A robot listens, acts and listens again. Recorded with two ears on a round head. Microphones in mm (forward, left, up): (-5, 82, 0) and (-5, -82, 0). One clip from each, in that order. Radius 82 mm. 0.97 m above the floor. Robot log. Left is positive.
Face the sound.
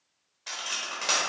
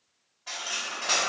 note: The cutlery clinking: about 60° left or 120° left.
cmd yaw +60
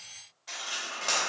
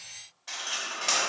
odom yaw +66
end: Found it: cutlery clinking, straight ahead, under 1 m away.